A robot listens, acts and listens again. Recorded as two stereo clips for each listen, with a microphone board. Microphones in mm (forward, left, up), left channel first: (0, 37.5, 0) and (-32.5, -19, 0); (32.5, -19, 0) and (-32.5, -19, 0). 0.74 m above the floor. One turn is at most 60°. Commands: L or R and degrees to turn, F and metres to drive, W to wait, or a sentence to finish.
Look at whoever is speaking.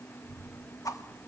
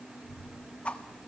L60
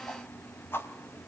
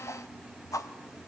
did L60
L55
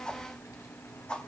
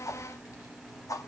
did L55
L25
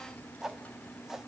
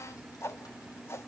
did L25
Facing the child speaking, 2 to 4 m away.